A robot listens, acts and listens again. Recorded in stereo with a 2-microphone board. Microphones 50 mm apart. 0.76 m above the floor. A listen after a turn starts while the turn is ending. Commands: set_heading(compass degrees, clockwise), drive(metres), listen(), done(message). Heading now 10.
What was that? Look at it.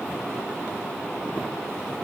listen()
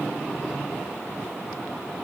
listen()
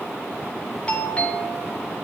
set_heading(345)
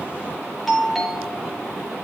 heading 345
done("Facing the doorbell, 2 to 4 m away.")